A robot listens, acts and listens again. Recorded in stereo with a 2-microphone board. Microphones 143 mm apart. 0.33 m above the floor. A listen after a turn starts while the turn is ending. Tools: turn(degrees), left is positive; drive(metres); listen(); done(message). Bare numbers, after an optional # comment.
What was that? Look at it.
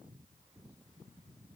listen()
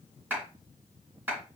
turn(-30)
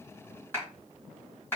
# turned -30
# So it is at 20° left.
turn(20)
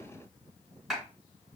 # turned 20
done("Facing the clap, 2 to 4 m away.")